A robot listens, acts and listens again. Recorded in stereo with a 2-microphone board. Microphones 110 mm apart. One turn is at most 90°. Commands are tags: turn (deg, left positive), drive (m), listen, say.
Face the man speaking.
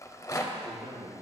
<turn deg="-65"/>
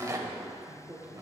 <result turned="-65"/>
<turn deg="-20"/>
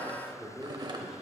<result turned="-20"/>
<say>Facing the man speaking, 1 to 2 m away.</say>